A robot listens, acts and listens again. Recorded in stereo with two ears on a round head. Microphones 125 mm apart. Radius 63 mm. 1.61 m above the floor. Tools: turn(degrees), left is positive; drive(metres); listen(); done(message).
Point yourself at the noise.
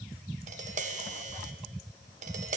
turn(degrees=-55)
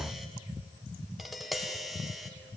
done("Facing the tapping.")